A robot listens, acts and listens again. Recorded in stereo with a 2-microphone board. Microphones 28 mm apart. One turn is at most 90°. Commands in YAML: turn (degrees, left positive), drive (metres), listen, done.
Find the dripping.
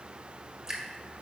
turn: -20
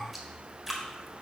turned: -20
done: "Found it: dripping, straight ahead, 1 to 2 m away."